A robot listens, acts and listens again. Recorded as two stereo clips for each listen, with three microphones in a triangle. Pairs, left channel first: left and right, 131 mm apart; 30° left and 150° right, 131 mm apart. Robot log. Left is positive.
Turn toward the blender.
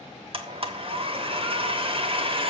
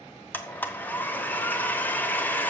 note: The blender: 45° right.
cmd yaw -45
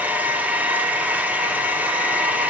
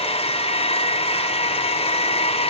note: The blender is now 10° right.
cmd yaw -10
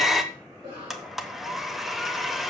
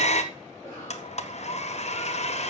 end: Found it: a blender, straight ahead, 1 to 2 m away.